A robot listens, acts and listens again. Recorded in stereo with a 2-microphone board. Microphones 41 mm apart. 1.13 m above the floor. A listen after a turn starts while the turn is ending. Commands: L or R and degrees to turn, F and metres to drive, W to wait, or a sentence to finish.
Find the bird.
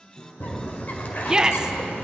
L40
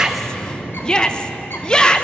L95
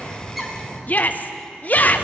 R20
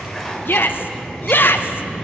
Found it: a bird, straight ahead, 1 to 2 m away.